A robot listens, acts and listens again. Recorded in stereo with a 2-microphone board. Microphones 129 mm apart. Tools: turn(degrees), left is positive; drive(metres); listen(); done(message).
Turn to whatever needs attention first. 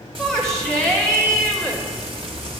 turn(degrees=30)
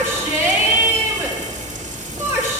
turn(degrees=-25)
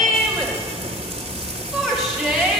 done("Found it: a shout, straight ahead.")